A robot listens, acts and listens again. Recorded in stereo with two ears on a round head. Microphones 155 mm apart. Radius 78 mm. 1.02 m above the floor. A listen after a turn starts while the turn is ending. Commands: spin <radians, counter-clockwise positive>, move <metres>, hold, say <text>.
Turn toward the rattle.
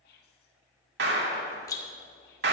spin 0.35
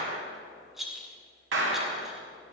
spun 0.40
say Found it: a rattle, straight ahead, 1 to 2 m away.